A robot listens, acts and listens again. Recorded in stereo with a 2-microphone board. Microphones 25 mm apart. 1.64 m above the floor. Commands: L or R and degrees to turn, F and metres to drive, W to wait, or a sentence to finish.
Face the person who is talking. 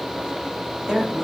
R30
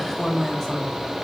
Found it: a woman speaking, straight ahead.